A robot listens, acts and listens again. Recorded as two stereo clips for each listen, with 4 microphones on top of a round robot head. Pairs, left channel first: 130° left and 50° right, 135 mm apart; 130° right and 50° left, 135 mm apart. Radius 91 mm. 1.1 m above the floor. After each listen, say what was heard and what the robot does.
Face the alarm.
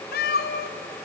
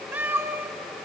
Keep listening.
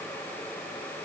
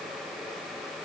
Keep listening.
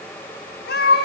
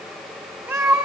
I can't make out an alarm to turn to.